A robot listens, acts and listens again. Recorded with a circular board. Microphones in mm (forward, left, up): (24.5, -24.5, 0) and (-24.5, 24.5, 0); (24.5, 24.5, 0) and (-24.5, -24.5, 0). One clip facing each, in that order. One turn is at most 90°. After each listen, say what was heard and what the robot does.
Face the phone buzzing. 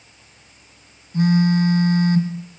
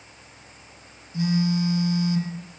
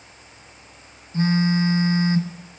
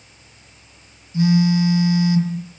Facing the phone buzzing, 2 to 4 m away.